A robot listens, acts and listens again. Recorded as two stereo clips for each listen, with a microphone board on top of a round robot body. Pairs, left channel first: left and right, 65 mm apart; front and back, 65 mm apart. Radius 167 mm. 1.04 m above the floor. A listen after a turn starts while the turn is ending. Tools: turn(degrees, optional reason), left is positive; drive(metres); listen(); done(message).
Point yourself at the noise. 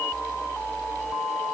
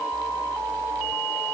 listen()
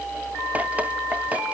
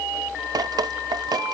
turn(degrees=-160, reason="The dripping: 160° right.")
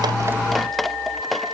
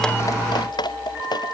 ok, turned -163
done("Found it: dripping, straight ahead.")